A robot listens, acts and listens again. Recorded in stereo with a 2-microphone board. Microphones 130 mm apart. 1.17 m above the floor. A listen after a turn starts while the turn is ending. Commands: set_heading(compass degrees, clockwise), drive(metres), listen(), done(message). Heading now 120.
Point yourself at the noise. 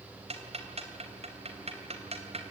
set_heading(170)
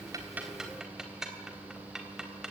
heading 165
done("Found it: ticking, straight ahead.")